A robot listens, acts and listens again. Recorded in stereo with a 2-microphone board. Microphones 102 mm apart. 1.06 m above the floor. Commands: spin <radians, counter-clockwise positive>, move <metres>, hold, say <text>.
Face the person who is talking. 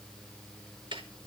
hold
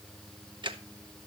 hold
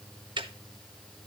say I can't make out anyone speaking to turn to.